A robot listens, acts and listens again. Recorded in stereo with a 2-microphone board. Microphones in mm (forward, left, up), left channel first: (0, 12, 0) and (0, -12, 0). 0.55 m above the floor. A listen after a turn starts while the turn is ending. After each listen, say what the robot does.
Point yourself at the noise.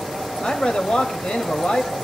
Turn 60° left.
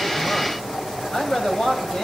Turn 35° left.
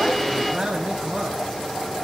Turn 30° right.
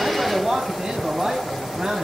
Turn 15° right.
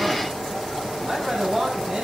Found it: a man speaking, straight ahead.